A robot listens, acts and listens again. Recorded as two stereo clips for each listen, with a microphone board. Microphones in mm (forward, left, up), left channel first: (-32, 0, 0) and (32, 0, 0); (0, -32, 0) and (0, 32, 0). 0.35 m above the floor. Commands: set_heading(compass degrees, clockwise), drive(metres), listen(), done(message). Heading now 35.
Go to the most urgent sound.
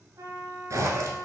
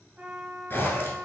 listen()
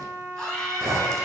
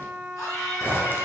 set_heading(135)
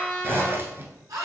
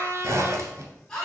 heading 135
set_heading(145)
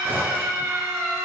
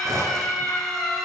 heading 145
drive(1.0)
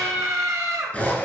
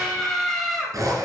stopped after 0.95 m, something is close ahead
done("I am next to the scream.")